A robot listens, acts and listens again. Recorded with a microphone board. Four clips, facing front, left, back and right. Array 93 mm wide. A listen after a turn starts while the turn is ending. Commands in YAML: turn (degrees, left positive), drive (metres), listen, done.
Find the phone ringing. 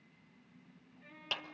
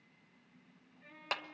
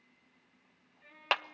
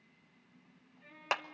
listen: true
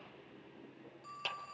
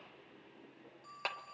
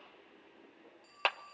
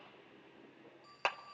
turn: 10
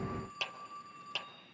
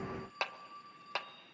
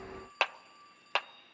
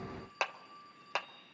done: "Found it: a phone ringing, straight ahead."